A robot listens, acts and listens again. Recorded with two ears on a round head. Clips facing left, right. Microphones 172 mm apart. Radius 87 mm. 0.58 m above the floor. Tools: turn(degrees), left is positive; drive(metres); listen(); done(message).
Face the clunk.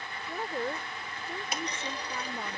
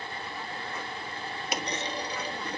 turn(degrees=-60)
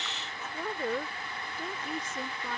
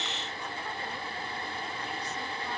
listen()
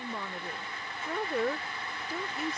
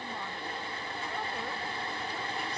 done("I heard a clunk, but can't make it out now. It was about straight ahead or 60° right.")